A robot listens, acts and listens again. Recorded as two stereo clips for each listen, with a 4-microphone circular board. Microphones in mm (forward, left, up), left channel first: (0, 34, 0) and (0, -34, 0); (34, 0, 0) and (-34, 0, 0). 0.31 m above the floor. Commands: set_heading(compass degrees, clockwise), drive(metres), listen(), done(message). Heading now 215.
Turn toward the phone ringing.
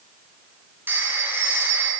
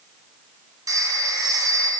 set_heading(5)
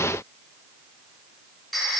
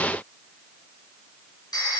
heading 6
done("Found it: a phone ringing, straight ahead, 2 to 4 m away.")